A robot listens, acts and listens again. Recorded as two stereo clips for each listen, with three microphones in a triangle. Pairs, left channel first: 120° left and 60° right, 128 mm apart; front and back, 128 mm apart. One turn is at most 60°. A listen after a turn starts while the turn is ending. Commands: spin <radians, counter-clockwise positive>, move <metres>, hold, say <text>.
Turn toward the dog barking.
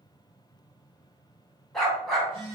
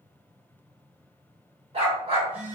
spin -1.05
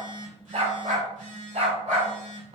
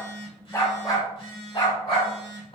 spin -0.70
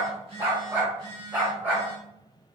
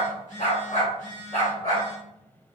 spin 0.26
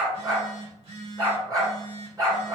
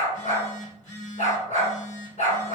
say Found it: a dog barking, straight ahead, 2 to 4 m away.